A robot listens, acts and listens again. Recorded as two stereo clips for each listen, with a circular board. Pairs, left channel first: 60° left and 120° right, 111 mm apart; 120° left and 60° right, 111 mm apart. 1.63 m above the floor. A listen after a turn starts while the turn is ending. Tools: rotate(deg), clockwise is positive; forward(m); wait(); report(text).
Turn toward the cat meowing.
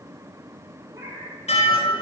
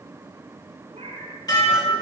rotate(65)
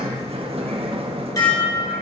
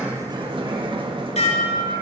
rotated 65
wait()
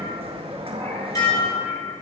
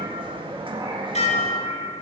wait()
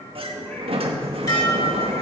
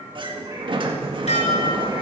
report("I heard a cat meowing from this way, but can't make it out now.")